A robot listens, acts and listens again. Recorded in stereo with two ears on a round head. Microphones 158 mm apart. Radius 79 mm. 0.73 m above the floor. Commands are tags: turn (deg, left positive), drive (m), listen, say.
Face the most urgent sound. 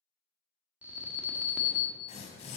<turn deg="-30"/>
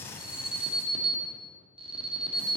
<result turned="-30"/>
<turn deg="-140"/>
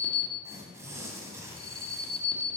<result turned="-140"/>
<turn deg="35"/>
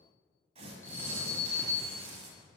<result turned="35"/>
<turn deg="15"/>
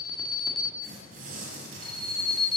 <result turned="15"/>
<say>Facing the alarm.</say>